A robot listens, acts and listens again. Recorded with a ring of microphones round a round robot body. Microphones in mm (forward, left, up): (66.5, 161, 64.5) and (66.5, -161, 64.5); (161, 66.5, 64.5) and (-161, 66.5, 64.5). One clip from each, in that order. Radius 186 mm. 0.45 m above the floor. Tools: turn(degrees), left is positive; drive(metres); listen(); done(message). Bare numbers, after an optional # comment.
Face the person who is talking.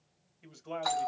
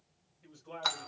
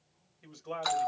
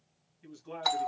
# The man speaking: 60° left.
turn(60)
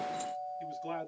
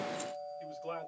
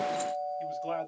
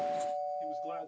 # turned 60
# The man speaking is now 15° left.
turn(15)
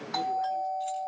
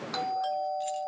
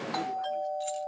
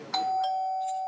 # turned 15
listen()
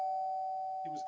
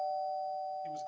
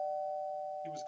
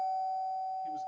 listen()
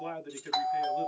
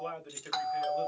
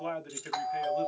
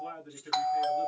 done("Found it: a man speaking, straight ahead, 2 to 4 m away.")